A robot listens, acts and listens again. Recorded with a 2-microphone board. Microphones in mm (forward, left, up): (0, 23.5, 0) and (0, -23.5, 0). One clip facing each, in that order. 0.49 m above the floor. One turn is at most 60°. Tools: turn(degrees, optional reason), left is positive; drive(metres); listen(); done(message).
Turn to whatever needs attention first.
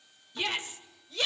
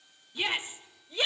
turn(degrees=-20, reason="The shout: about 20° right or 160° right.")
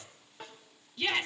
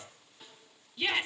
done("Facing the shout.")